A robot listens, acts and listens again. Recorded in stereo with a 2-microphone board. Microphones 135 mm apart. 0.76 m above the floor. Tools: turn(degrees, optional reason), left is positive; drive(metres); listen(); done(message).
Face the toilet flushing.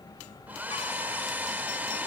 listen()
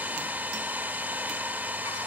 listen()
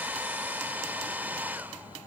done("I can't make out a toilet flushing, only a hair dryer.")